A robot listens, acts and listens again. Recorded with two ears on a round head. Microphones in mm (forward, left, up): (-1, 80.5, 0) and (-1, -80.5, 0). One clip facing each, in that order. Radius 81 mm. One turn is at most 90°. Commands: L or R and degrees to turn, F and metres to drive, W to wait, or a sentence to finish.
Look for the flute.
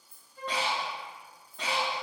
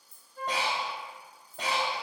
R40
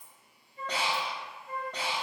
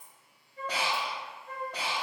R90
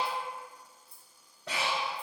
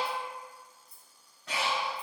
R10
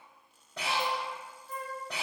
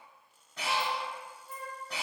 R10
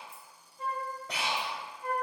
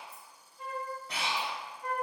Found it: a flute, straight ahead.